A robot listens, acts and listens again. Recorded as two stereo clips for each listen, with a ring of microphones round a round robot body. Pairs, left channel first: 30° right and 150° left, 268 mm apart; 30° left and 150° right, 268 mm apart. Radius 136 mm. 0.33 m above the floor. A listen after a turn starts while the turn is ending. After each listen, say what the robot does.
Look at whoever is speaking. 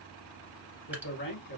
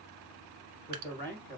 Turn 80° right.
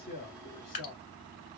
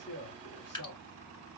Facing the man speaking, 2 to 4 m away.